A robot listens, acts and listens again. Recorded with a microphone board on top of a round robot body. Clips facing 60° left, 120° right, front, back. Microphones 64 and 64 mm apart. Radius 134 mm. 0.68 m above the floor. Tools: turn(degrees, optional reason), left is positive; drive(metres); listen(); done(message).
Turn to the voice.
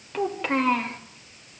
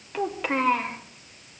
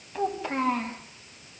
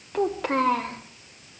turn(degrees=155, reason="The child speaking: 155° left.")
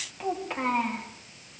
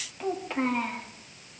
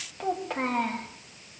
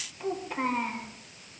turn(degrees=-25, reason="The child speaking is now 25° right.")
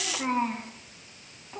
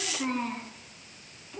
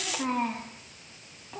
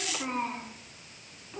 done("Facing the child speaking, over 4 m away.")